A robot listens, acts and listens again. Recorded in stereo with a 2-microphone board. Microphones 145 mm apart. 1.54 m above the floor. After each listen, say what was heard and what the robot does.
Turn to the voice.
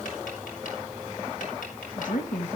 The woman speaking: about 65° left or 115° left. Turn 65° left.
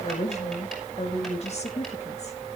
So it is at 50° left. Turn 50° left.
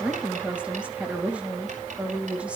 The woman speaking is now 10° right. Turn 10° right.
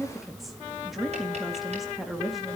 Facing the woman speaking, 2 to 4 m away.